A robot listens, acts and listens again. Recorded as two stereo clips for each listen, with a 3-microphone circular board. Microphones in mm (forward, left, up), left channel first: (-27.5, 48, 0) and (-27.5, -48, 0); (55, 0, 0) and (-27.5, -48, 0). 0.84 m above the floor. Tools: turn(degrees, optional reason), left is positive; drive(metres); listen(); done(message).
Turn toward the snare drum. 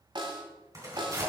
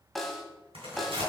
turn(degrees=-60, reason="The snare drum: 60° right.")
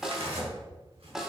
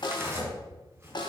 done("Found it: a snare drum, straight ahead, 1 to 2 m away.")